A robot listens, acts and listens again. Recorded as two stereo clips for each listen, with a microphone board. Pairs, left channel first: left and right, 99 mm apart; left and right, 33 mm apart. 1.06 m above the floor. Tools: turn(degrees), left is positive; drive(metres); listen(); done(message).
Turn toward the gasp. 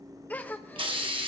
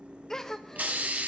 turn(degrees=15)
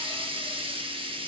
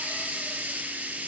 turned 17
listen()
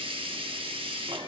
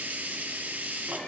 done("I heard a gasp, but can't make it out now. It was about straight ahead or 145° left.")